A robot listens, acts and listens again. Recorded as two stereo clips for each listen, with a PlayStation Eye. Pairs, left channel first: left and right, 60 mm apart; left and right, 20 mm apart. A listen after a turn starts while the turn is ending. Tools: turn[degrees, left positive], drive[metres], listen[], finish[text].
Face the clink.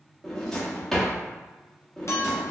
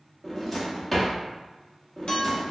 Thought: The clink: about 55° left or 125° left.
Action: turn[55]
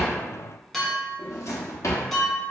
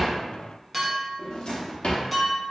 Action: finish[Facing the clink, under 1 m away.]